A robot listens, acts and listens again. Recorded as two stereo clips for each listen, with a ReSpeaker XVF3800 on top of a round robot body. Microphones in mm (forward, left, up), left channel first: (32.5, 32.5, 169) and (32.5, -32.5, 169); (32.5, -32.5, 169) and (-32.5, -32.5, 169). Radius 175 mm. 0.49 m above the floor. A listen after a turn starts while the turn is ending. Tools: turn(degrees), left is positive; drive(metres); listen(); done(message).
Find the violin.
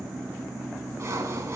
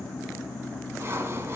listen()
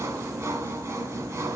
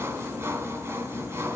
listen()
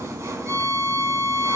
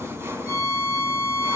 turn(degrees=-45)
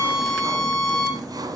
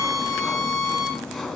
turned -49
done("Found it: a violin, straight ahead, 2 to 4 m away.")